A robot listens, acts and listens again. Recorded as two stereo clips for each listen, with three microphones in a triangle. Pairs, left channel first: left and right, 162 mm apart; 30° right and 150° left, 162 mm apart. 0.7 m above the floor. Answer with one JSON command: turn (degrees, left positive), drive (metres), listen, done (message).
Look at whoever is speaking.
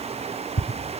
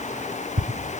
{"listen": true}
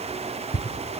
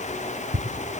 {"listen": true}
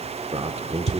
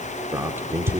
{"turn": -135}
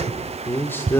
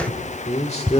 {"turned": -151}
{"turn": 15}
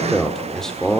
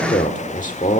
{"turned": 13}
{"done": "Facing the man speaking, 1 to 2 m away."}